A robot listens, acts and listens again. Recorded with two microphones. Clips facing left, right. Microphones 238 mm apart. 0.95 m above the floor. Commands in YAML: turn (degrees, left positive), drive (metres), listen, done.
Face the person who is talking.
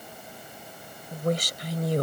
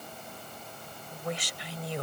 turn: 45
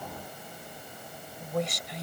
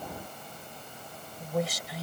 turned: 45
done: "Found it: a woman speaking, straight ahead."